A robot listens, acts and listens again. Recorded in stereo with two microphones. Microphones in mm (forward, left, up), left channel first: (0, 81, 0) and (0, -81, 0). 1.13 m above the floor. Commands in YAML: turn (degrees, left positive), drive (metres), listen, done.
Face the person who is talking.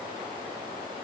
listen: true
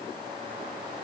listen: true
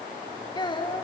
turn: 25
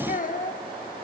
turn: 130
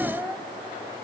turn: -10
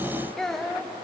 done: "Found it: a child speaking, straight ahead."